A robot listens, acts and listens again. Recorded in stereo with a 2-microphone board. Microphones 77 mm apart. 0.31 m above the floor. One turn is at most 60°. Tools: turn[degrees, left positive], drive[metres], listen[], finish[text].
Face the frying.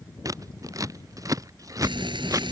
Action: turn[-60]
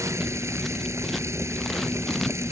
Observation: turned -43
Thought: So it is at 35° right.
Action: turn[-35]
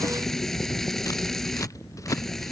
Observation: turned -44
Action: finish[Facing the frying.]